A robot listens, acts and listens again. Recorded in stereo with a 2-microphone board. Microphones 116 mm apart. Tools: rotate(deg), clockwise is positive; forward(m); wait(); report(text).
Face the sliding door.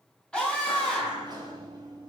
rotate(40)
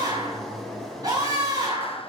report("Facing the sliding door.")